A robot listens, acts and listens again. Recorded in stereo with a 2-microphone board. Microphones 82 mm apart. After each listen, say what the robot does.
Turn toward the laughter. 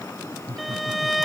Turn 55° right.
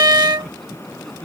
Facing the laughter.